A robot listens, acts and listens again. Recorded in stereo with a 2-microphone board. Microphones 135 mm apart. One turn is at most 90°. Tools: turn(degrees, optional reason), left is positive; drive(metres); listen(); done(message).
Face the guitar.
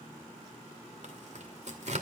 listen()
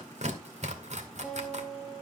turn(degrees=-30)
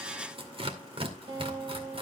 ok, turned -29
turn(degrees=-90, reason="So it is at 140° right.")
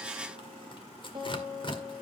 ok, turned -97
turn(degrees=-40, reason="The guitar is now 40° right.")
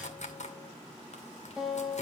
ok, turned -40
done("Facing the guitar, 2 to 4 m away.")